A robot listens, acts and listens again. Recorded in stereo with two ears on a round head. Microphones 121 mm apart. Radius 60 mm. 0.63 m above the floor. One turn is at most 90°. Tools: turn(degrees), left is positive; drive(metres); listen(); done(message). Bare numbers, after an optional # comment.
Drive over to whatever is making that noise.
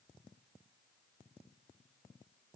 listen()
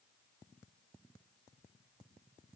listen()
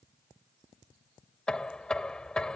turn(30)
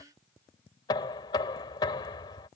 # So it is at 145° left.
turn(90)
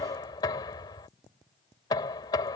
# The knocking is now 30° left.
turn(30)
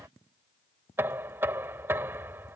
# The knocking is now 15° right.
turn(-15)
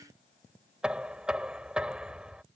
drive(1.0)
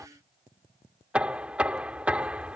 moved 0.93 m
# The knocking is now 10° right.
turn(-10)
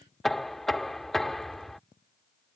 drive(1.0)
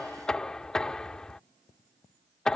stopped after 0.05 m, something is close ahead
done("I am next to the knocking.")